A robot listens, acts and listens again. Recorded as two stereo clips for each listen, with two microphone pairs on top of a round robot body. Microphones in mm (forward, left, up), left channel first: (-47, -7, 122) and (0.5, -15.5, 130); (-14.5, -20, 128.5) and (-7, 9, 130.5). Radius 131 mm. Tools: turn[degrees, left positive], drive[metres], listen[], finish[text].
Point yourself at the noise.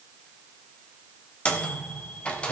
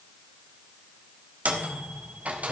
Thought: The microwave: 110° left.
Action: turn[110]
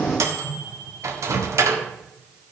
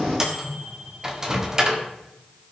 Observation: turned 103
Action: finish[Found it: a microwave, straight ahead.]